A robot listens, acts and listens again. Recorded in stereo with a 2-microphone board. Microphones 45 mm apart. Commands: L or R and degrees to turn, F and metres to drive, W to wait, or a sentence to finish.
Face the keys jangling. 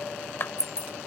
L90
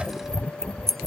Facing the keys jangling.